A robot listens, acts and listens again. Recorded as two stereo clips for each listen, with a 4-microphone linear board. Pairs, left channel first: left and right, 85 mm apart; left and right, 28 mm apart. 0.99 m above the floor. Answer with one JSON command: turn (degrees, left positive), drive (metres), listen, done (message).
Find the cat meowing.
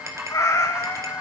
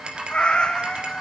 {"turn": 30}
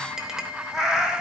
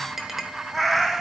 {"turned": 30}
{"turn": -10}
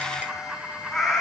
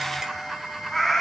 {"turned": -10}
{"done": "Facing the cat meowing."}